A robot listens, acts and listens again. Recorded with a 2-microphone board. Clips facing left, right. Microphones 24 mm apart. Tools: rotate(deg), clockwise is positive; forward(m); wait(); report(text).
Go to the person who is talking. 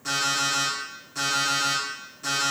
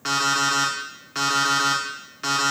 wait()
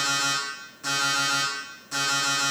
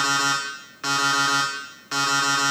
wait()
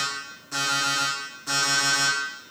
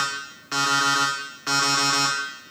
report("I can't make out anyone speaking, only an alarm clock.")